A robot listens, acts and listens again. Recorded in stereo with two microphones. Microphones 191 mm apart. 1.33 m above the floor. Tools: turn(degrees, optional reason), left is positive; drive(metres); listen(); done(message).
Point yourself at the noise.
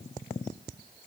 listen()
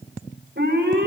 turn(degrees=-75, reason="The alarm: about 75° right or 105° right.")
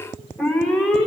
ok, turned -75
done("Facing the alarm.")